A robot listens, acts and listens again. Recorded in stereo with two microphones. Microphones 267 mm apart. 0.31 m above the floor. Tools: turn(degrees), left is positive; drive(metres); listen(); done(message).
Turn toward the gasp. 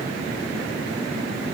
listen()
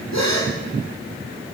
turn(degrees=90)
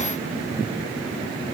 done("I heard a gasp from this way, but can't make it out now.")